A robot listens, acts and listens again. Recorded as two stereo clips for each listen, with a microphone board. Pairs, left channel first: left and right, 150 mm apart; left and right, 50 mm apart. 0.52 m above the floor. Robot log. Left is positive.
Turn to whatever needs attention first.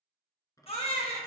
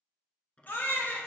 note: The baby crying: about 40° left or 140° left.
cmd yaw +40
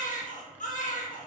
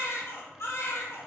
note: So it is at 90° left.
cmd yaw +90
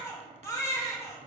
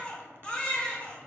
note: The baby crying is now 25° left.
cmd yaw +25
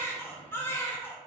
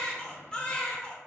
note: The baby crying is now 20° left.
cmd yaw +20
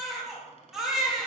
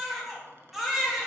end: Found it: a baby crying, straight ahead.